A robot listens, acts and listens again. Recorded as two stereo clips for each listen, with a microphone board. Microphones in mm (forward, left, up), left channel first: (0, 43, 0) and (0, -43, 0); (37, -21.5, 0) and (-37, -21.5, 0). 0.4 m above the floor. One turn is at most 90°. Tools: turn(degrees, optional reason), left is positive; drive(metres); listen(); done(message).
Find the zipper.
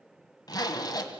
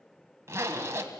turn(degrees=90, reason="The zipper: 130° left.")
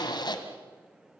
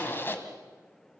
turn(degrees=60, reason="The zipper is now 60° left.")
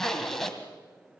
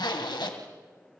done("Facing the zipper.")